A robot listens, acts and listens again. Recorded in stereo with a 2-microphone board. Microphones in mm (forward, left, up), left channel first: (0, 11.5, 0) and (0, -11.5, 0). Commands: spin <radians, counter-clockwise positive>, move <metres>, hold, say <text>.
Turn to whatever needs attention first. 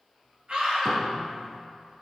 spin -0.87
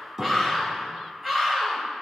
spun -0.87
spin -0.26
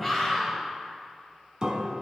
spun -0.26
say Found it: a scream, straight ahead.